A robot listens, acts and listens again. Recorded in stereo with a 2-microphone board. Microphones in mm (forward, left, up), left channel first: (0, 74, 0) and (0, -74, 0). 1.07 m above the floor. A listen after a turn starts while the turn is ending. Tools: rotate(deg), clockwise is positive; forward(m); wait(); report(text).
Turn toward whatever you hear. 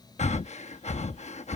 rotate(-50)
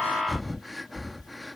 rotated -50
report("Facing the breathing.")